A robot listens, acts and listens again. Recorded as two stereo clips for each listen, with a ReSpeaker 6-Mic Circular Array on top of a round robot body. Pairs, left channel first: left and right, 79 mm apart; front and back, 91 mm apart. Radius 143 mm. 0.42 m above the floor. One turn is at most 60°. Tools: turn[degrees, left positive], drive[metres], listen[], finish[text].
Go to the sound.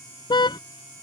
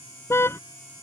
Thought: The car horn: 65° left.
Action: turn[60]
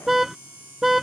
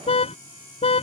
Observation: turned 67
Action: drive[1.0]
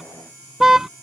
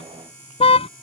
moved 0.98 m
Action: drive[1.0]
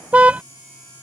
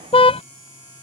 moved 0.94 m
Thought: The car horn is now 15° right.
Action: turn[-15]
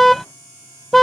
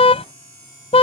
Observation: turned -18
Action: drive[1.0]
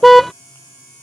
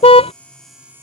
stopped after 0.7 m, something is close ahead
Action: finish[Arrived at the car horn, straight ahead.]